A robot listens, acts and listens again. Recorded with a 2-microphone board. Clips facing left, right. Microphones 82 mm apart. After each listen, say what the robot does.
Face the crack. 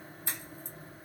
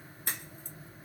Turn 60° right.
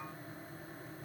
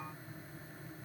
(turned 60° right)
Keep listening.
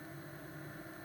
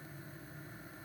I heard a crack, but can't make it out now. It was about straight ahead or 60° right.